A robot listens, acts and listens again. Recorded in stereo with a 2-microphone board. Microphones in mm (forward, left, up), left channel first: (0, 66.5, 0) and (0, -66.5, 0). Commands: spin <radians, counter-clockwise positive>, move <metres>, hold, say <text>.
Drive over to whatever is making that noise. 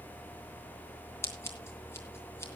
spin 0.35
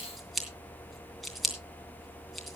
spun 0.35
move 1.0
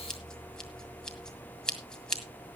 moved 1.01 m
move 1.0
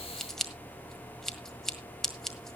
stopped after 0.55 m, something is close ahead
say I am next to the scissors.